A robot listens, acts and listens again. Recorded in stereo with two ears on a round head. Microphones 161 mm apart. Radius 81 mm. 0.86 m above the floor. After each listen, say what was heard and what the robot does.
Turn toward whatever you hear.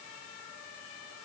Keep listening.
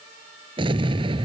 The explosion: about 30° right or 150° right. Turn 30° right.
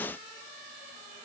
Keep listening.
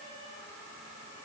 I heard an explosion, but can't make it out now. It was about straight ahead or 120° right.